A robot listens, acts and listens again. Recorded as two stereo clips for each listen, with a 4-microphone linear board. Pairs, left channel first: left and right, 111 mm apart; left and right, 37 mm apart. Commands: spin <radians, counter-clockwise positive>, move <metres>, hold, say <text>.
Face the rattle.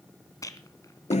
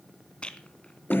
spin 0.52
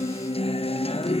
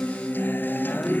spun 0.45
hold
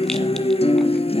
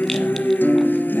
hold
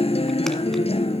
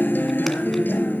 say I heard a rattle, but can't make it out now. It was about 5° left or 125° left.